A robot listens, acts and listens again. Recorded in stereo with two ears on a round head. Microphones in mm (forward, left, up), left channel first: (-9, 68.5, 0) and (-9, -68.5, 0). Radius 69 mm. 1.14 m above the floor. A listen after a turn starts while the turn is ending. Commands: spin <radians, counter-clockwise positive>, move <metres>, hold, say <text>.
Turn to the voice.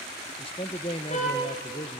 spin 0.61
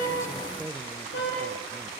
hold
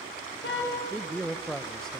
say Facing the man speaking.